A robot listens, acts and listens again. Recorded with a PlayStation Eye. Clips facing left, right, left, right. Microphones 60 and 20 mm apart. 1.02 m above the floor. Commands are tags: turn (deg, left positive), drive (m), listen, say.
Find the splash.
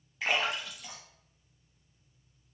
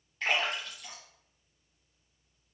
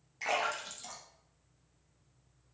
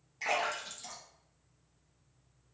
<turn deg="30"/>
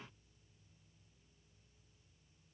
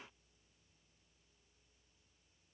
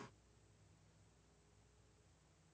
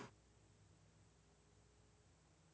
<listen/>
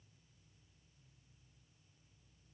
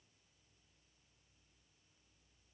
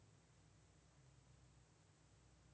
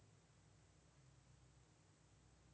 <say>I heard a splash, but can't make it out now. It was about 25° right or 145° left.</say>